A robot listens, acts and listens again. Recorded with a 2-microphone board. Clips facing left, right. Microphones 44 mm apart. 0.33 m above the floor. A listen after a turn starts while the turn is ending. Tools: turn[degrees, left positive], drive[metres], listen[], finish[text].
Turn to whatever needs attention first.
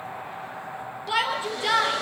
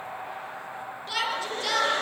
Thought: The shout: about 20° left or 160° left.
Action: turn[20]
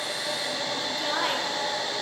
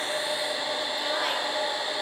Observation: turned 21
Action: listen[]
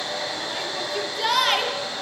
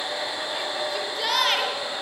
Action: finish[Found it: a shout, straight ahead, over 4 m away.]